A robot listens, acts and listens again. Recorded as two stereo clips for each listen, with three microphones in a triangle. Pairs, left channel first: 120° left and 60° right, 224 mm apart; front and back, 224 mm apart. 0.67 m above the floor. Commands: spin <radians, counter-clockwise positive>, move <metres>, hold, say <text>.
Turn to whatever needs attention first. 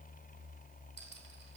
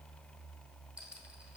hold
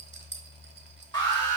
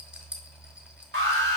spin -2.97
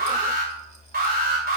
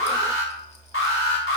spin -0.26
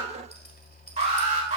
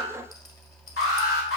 say Found it: an alarm, straight ahead.